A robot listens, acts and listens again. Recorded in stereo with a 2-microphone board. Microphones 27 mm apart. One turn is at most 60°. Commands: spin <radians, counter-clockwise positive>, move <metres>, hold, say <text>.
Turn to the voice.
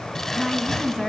spin 0.52
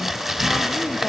hold
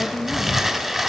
spin 0.52
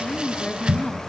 spin 1.05
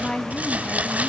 spin 1.05
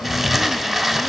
spin 0.96
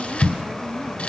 hold
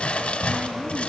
say I heard a woman speaking from this way, but can't make it out now.